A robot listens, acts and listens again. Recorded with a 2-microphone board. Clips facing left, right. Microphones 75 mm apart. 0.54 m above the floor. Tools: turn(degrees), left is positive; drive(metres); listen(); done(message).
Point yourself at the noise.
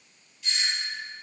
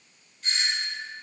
turn(degrees=-45)
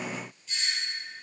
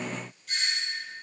turn(degrees=-80)
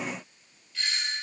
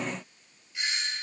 turn(degrees=-25)
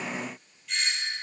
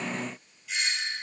done("Facing the doorbell, 2 to 4 m away.")